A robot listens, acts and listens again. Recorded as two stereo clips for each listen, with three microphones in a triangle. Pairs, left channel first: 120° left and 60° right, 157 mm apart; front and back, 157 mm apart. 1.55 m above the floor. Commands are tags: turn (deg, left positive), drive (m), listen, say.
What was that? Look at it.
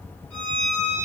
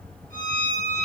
<turn deg="-160"/>
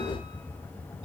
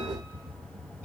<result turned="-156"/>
<listen/>
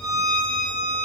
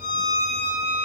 <say>Facing the violin.</say>